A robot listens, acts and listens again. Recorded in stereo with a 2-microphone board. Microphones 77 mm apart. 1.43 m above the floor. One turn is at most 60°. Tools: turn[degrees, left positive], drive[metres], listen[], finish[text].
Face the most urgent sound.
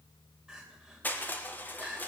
Action: turn[-30]
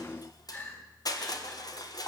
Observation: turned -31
Thought: So it is at 25° left.
Action: turn[25]
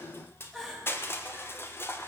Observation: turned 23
Action: finish[Found it: crying, straight ahead.]